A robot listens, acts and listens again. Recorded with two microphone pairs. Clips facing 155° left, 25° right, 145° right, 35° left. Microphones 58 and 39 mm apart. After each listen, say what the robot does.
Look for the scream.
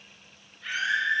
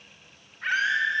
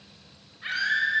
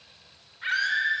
Found it: a scream, straight ahead, 2 to 4 m away.